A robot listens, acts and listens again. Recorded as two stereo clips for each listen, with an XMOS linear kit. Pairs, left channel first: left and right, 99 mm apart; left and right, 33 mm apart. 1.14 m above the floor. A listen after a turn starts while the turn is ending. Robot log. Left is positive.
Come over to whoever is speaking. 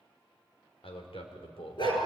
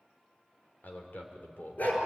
cmd yaw +90
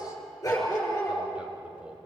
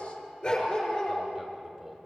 note: So it is at 10° right.
cmd yaw -10
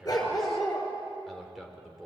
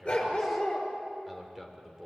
cmd fwd 1.0
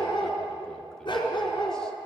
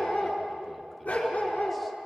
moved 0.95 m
cmd idle
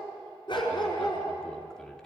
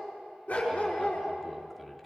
cmd idle
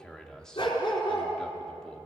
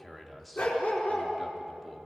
cmd fwd 1.0
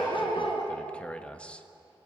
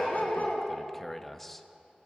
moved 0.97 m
note: The man speaking is now 10° left.
cmd yaw +10
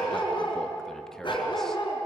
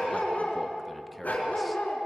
cmd idle
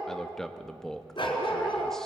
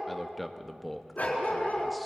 cmd fwd 1.0
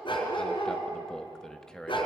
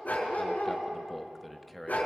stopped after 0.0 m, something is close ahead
end: I am next to the man speaking.